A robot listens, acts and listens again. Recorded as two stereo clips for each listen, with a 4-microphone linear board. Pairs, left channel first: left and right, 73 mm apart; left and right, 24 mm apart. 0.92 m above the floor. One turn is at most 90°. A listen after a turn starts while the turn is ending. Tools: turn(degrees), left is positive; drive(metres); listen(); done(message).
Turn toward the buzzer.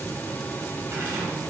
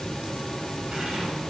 listen()
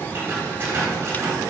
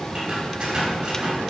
listen()
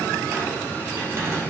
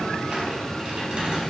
done("I can't make out a buzzer to turn to.")